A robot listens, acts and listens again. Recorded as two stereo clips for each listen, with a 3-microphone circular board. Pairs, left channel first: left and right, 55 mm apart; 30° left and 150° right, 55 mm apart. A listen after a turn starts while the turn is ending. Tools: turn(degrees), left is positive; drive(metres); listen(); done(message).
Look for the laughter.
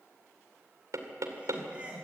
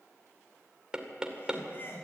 turn(degrees=-20)
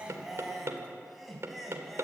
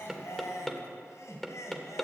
done("Facing the laughter.")